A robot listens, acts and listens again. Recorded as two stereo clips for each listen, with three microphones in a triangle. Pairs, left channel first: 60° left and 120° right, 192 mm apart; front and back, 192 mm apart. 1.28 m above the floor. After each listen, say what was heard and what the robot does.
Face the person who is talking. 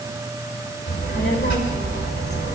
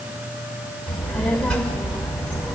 The child speaking: 85° left. Turn 85° left.
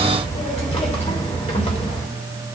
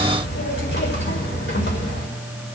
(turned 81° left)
Found it: a child speaking, straight ahead.